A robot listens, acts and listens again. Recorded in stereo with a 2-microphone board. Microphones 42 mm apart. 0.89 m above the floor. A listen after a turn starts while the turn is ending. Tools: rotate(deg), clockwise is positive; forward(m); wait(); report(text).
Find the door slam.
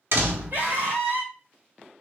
rotate(65)
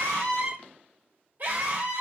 wait()
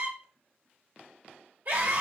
report("I heard a door slam, but can't make it out now. It was about straight ahead or 50° right.")